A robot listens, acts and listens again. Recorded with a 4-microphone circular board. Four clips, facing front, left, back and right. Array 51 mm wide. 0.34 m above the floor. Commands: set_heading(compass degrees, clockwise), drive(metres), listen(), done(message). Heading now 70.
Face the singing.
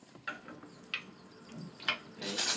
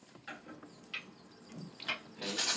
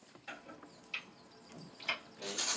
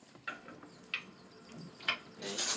set_heading(10)
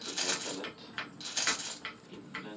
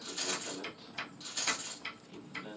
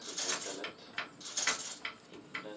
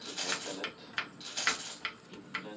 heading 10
set_heading(45)
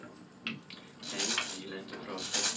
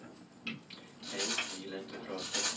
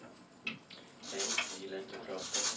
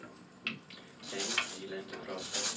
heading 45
done("Found it: singing, straight ahead, 2 to 4 m away.")